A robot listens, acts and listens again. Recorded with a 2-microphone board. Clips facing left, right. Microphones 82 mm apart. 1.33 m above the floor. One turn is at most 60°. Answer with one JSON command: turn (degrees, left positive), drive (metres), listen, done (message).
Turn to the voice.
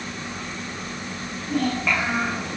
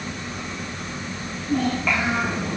{"turn": 30}
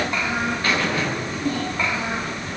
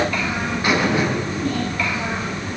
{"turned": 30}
{"listen": true}
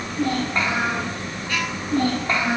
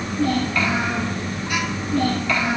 {"turn": 60}
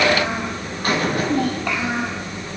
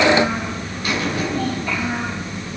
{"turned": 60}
{"turn": 60}
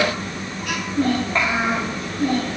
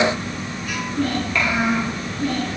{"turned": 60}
{"turn": 30}
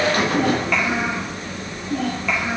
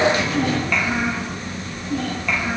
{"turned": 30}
{"done": "Facing the child speaking."}